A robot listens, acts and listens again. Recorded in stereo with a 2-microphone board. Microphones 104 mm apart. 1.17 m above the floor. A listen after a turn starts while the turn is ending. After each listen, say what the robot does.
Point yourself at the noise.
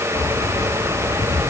Turn 30° left.
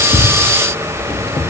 Turn 120° left.
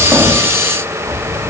Turn 35° right.
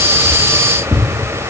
Found it: keys jangling, straight ahead, 1 to 2 m away.